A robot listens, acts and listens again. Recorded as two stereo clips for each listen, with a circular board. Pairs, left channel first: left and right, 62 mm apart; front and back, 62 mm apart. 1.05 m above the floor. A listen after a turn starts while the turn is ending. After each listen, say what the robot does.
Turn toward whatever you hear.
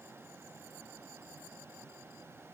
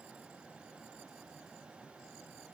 Keep listening.
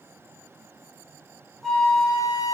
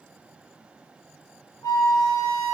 Found it: a flute, straight ahead, 1 to 2 m away.